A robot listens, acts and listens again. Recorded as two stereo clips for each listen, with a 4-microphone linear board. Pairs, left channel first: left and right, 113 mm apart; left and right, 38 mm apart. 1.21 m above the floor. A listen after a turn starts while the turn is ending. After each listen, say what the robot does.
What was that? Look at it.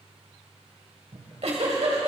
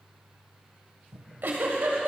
Turn 75° right.
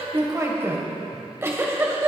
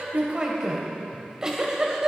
Turn 25° right.
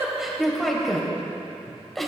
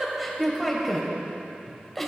Facing the giggle.